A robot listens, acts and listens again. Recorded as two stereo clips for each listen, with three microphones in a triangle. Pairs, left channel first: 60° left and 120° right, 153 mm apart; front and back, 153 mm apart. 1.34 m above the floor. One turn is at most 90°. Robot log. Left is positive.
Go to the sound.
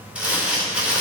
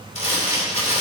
note: The crumpling: 40° right.
cmd yaw -40
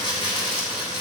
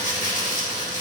cmd fwd 1.0
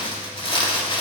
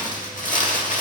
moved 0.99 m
note: The crumpling is now 10° left.
cmd yaw +10
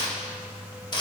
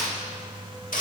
cmd fwd 1.0
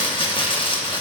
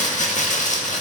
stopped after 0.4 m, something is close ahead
note: The crumpling is now 10° left.
cmd yaw +10
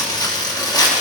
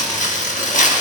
end: I am next to the crumpling.